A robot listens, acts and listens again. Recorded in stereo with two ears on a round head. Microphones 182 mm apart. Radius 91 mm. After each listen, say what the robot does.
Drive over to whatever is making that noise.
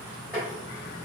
Turn 30° right.
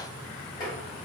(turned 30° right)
Keep listening.
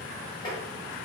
Turn 20° left.
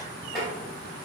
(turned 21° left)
Drive 1.0 m forward.
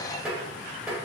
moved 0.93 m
Drive 1.0 m forward.
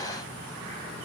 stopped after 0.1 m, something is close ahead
Keep listening.
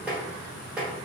Arrived at the tapping, straight ahead.